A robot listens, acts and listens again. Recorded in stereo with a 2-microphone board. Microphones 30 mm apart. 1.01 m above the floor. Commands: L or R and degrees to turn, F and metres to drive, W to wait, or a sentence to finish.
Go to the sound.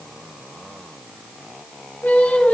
L65
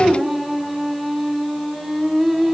F1.0
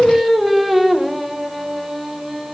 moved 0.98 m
F1.0
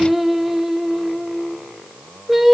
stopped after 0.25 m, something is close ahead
R10
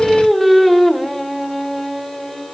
I am next to the singing.